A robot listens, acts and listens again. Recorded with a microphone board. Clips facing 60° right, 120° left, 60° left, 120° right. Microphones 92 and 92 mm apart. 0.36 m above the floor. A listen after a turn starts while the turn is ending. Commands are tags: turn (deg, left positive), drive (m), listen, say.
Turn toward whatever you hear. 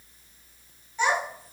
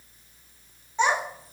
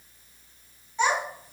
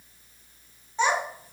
<turn deg="180"/>
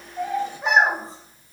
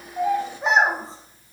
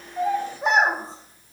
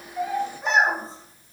<turn deg="60"/>
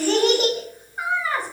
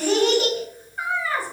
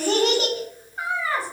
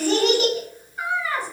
<say>Found it: a child speaking, straight ahead.</say>